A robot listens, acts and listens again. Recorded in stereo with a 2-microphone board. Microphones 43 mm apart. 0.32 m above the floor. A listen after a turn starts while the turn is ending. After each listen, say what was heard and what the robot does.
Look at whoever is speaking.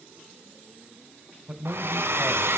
The man speaking: about 30° right or 150° right. Turn 30° right.
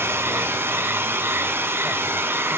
Keep listening.
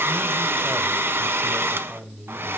Facing the man speaking, 1 to 2 m away.